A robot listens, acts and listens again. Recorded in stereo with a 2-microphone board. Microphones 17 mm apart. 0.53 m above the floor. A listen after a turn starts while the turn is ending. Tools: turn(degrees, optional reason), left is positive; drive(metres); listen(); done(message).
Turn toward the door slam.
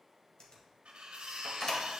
turn(degrees=45, reason="The door slam: about 45° left or 135° left.")
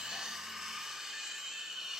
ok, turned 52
listen()
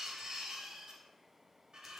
done("I heard a door slam, but can't make it out now. It was about 10° right or 85° left.")